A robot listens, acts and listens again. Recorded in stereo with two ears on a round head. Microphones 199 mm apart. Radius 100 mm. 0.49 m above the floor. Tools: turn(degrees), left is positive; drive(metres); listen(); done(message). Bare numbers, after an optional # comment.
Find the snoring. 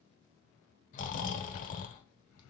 # The snoring: about 40° left or 140° left.
turn(40)
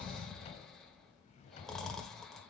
done("Found it: snoring, straight ahead, 1 to 2 m away.")